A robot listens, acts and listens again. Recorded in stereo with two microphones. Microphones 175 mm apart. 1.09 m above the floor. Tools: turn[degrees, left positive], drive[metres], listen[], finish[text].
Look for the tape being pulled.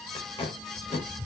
Thought: The tape being pulled: about 35° left or 145° left.
Action: turn[35]
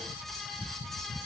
Action: listen[]
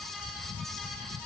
Action: listen[]
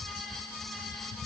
Action: finish[I heard tape being pulled, but can't make it out now. It was about straight ahead or 110° left.]